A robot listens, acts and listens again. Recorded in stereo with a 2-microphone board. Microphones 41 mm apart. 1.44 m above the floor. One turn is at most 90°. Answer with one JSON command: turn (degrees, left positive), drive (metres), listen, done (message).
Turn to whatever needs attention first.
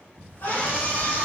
{"turn": 90}
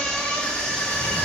{"turn": 10}
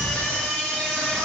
{"done": "Facing the scream."}